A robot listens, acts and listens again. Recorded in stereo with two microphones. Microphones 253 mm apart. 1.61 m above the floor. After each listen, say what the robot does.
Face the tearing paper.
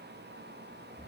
Keep listening.
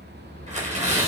Turn 25° right.
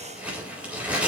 Facing the tearing paper.